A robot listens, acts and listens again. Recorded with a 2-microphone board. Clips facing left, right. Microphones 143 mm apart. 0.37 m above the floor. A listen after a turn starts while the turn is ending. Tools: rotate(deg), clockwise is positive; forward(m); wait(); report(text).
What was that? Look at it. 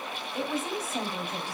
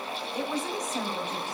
rotate(-30)
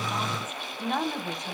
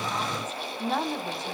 rotate(30)
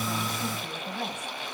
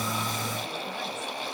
wait()
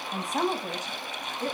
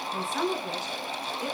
rotate(-50)
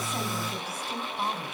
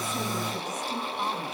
rotate(-10)
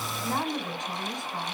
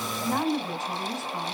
report("Found it: a woman speaking, straight ahead.")